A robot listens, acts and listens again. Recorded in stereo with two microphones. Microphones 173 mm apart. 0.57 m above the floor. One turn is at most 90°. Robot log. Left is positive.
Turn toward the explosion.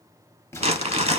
note: The explosion: about 15° left or 165° left.
cmd yaw +15
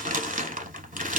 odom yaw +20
cmd idle
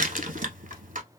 end: I heard an explosion, but can't make it out now. It was about 5° right or 145° left.